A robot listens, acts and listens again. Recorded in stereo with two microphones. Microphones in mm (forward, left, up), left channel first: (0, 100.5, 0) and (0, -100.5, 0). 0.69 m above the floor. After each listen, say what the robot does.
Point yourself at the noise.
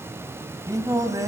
Turn 15° right.
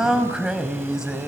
Found it: singing, straight ahead, 1 to 2 m away.